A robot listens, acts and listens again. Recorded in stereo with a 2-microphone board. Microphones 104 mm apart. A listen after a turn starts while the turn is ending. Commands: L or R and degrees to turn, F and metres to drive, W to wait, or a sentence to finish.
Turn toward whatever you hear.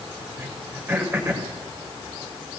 R20
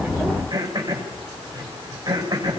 R140
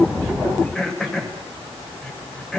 Found it: throat clearing, straight ahead, over 4 m away.